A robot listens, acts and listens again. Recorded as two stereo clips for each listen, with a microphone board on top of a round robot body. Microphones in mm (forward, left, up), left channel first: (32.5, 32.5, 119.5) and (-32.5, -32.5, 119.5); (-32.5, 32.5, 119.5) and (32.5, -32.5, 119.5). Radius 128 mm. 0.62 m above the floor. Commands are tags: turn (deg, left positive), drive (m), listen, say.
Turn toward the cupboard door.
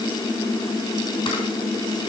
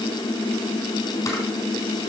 <listen/>
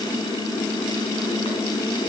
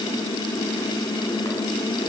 <listen/>
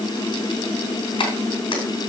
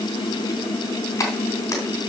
<say>I can't make out a cupboard door to turn to.</say>